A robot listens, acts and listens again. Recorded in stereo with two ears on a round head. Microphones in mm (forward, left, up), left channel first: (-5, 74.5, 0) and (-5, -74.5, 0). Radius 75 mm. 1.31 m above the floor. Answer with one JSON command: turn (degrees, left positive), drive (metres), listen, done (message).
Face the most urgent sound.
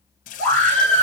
{"turn": -90}
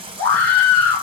{"turn": 15}
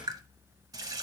{"listen": true}
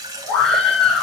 {"done": "Facing the scream."}